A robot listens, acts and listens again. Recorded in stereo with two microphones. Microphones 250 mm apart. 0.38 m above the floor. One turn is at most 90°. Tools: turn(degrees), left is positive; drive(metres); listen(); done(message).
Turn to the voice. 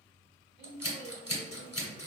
turn(degrees=-45)
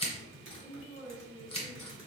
turn(degrees=-10)
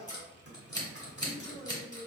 done("Facing the woman speaking.")